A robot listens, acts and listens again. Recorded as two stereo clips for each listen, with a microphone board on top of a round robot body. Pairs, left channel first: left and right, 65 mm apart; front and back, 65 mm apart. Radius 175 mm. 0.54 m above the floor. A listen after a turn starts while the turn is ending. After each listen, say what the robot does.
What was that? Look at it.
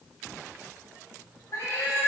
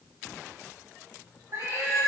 Turn 140° left.
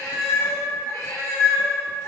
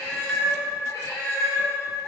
Turn 55° left.
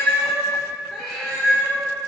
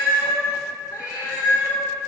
Found it: a cat meowing, straight ahead.